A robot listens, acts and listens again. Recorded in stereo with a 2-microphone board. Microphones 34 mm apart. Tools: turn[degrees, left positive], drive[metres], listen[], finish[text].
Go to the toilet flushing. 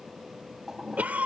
Thought: The toilet flushing: about 20° right or 160° right.
Action: turn[-20]
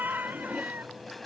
Action: drive[1.0]
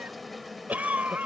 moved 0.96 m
Action: listen[]
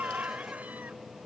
Action: listen[]
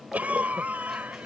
Action: finish[I heard a toilet flushing from this way, but can't make it out now. I did not reach it.]